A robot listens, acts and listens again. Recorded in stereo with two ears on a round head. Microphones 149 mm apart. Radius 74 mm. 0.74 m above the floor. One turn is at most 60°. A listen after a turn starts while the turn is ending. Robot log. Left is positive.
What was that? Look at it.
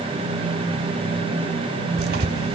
note: The tearing paper: about 65° right or 115° right.
cmd yaw -60
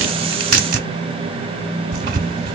note: So it is at 55° right.
cmd yaw -55
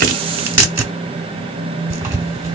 note: The tearing paper is now 15° right.
cmd yaw -15
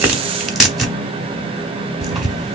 end: Found it: tearing paper, straight ahead.